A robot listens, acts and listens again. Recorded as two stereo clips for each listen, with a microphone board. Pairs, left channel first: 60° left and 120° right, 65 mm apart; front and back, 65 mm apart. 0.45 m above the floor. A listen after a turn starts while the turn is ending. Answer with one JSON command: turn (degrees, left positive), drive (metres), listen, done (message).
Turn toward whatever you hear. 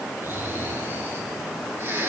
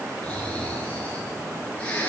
{"turn": -70}
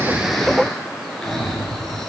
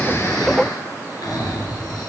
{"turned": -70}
{"turn": -25}
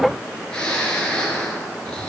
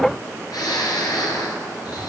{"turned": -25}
{"turn": -15}
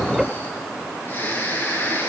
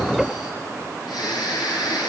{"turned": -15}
{"done": "Found it: snoring, straight ahead."}